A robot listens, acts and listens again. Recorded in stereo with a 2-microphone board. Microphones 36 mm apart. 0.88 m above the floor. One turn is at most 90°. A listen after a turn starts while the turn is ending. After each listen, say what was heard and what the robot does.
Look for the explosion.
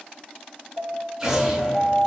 Turn 30° right.
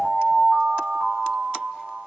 Keep listening.
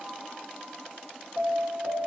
I heard an explosion, but can't make it out now. It was about 20° left or 140° right.